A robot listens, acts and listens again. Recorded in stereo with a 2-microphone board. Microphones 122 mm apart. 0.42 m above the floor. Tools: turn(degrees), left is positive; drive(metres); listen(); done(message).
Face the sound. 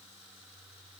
listen()
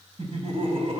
turn(degrees=-55)
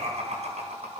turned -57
turn(degrees=-65)
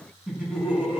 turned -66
turn(degrees=-10)
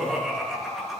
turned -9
done("Found it: laughter, straight ahead, over 4 m away.")